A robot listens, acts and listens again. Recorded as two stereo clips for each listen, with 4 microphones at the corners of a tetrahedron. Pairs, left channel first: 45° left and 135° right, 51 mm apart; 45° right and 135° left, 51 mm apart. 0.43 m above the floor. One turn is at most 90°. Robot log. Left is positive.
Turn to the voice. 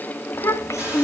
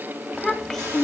note: The child speaking: 35° left.
cmd yaw +35
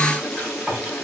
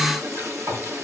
cmd idle
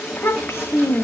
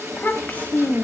note: The child speaking is now 10° left.
cmd yaw +10
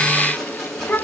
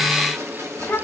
end: Found it: a child speaking, straight ahead.